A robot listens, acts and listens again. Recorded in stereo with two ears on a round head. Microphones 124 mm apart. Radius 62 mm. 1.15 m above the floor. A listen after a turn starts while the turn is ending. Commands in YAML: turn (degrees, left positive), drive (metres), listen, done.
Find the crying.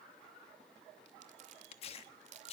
listen: true
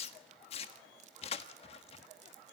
listen: true
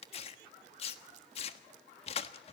done: "I can't make out crying, only crumpling and tearing paper."